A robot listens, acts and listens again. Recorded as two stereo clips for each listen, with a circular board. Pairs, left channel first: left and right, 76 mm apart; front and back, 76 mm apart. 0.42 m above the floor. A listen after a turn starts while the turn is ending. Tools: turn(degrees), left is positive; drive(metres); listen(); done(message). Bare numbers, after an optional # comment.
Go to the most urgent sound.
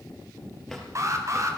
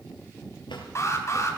# The alarm: 45° right.
turn(-45)
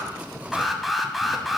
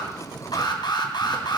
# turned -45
drive(1.0)
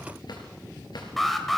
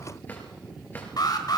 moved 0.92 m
drive(1.0)
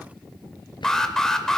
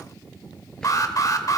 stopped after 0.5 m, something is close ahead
# The alarm is now 10° left.
turn(10)
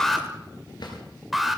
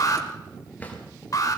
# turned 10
done("Arrived at the alarm, straight ahead.")